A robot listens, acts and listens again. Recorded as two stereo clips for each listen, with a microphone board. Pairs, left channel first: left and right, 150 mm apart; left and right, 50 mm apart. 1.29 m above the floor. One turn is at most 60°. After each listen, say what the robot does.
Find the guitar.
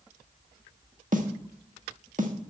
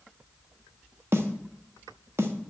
Keep listening.
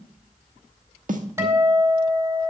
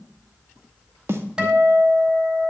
Turn 20° right.
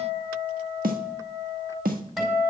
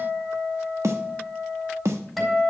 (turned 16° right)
Found it: a guitar, straight ahead, over 4 m away.